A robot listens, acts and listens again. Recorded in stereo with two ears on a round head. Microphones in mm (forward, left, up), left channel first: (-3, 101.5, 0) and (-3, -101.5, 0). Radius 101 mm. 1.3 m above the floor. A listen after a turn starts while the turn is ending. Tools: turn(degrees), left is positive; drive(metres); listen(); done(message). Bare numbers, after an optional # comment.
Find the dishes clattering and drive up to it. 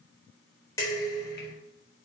turn(30)
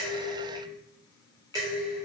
# So it is at 15° right.
turn(-15)
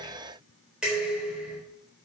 drive(1.0)
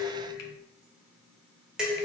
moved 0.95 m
drive(1.0)
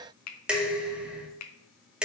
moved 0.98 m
drive(1.0)
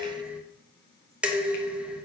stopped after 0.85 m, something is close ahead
done("Arrived at the dishes clattering, straight ahead.")